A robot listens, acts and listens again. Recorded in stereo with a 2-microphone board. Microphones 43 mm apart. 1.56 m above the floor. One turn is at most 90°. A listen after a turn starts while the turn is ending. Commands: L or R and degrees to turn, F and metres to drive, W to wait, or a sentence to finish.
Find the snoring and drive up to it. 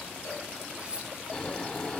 L20
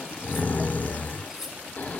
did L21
L90
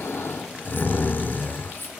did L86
L55
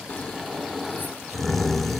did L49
F1.0
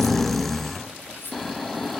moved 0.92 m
F1.0
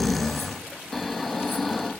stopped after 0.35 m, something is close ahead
I am next to the snoring.